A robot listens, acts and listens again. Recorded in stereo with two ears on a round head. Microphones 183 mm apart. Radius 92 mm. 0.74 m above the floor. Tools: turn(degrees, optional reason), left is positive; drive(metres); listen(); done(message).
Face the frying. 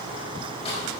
listen()
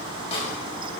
listen()
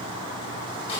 done("I can't make out frying to turn to.")